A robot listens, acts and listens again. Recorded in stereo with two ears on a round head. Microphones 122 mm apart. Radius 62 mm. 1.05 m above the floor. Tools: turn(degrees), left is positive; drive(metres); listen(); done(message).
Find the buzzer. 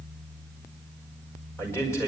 listen()
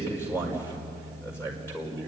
listen()
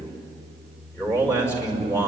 done("I can't make out a buzzer, only a man speaking.")